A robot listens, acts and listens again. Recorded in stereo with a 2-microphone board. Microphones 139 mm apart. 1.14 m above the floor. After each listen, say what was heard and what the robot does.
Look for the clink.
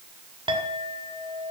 The clink: about 40° right or 140° right. Turn 40° right.
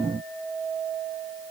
Facing the clink.